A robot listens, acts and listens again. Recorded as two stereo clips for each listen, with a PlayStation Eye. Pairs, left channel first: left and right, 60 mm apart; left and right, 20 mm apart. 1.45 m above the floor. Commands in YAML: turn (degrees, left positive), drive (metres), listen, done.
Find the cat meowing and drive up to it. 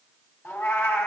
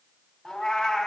turn: 45
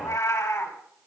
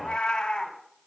turn: 85
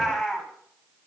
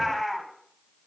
drive: 1.0
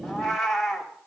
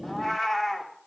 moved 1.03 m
drive: 1.0
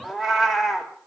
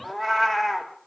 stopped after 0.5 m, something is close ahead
turn: -10
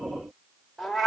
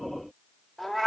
done: "I am next to the cat meowing."